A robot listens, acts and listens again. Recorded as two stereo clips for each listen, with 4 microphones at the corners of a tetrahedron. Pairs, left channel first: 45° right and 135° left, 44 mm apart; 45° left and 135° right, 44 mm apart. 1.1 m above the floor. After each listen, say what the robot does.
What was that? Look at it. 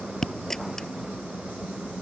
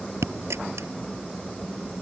Turn 125° right.
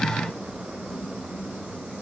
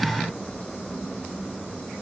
Facing where the dropped coin came from. I can't hear it now.